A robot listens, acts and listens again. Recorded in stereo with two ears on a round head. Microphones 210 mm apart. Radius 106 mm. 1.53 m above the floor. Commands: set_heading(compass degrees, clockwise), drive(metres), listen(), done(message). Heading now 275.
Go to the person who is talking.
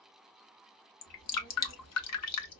set_heading(220)
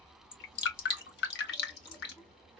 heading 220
drive(1.0)
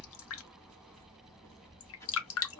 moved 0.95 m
set_heading(205)
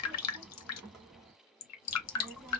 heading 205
drive(1.0)
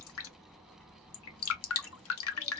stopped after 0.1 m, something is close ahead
done("Arrived at the child speaking, straight ahead.")